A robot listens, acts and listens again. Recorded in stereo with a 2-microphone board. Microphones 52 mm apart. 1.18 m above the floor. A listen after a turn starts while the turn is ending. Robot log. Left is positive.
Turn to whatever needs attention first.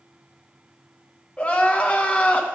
note: The crying: about 25° left or 155° left.
cmd yaw +25
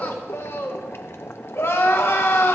note: So it is at 130° left.
cmd yaw +130
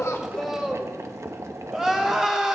end: Found it: crying, straight ahead, 1 to 2 m away.